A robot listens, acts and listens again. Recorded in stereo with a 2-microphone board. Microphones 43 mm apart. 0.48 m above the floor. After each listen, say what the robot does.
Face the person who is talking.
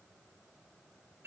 Keep listening.
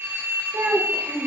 Turn 60° right.
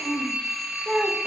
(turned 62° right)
Facing the child speaking, 1 to 2 m away.